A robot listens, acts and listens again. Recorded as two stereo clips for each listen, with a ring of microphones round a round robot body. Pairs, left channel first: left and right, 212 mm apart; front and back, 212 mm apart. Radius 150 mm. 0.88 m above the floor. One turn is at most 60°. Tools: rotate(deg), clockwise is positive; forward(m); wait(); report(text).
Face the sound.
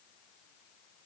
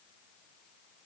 wait()
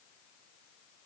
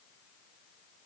wait()
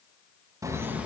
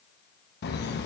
report("Found it: laughter, straight ahead.")